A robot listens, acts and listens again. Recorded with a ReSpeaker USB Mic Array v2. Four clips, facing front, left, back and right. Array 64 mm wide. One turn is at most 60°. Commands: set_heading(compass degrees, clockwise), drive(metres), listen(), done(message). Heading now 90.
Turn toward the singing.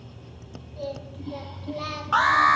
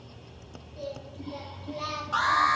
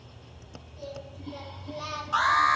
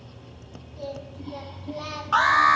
set_heading(80)
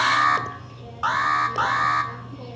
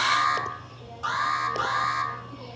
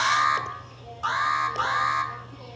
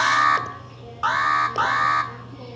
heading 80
listen()
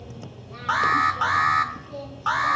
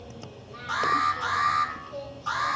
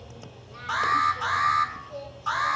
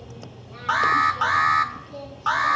done("Facing the singing.")